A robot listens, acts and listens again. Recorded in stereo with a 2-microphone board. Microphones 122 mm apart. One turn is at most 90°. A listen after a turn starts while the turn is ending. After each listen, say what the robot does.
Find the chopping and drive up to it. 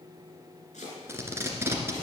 Turn 90° left.
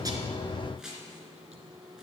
Drive 1.0 m forward.
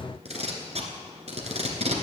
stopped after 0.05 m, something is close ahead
Keep listening.
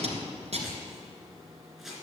Something is in my way. I am facing the chopping but have not reached it.